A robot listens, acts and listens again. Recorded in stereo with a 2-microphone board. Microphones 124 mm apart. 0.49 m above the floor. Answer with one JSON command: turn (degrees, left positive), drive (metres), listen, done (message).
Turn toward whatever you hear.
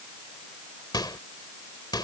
{"turn": 35}
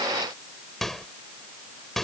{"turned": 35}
{"done": "Found it: a microwave, straight ahead."}